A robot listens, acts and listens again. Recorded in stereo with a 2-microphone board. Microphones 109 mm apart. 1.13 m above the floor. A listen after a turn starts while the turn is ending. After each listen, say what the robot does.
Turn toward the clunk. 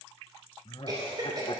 Keep listening.
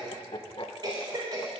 Keep listening.
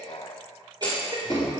Turn 30° left.
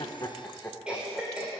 Keep listening.
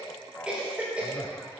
I heard a clunk, but can't make it out now. It was about 15° right or 135° left.